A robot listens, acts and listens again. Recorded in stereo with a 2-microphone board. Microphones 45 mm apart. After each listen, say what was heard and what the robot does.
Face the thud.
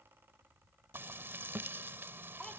The thud: about 40° right or 140° right. Turn 40° right.
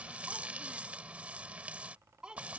Keep listening.
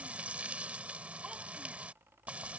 I heard a thud, but can't make it out now. It was about straight ahead or 100° right.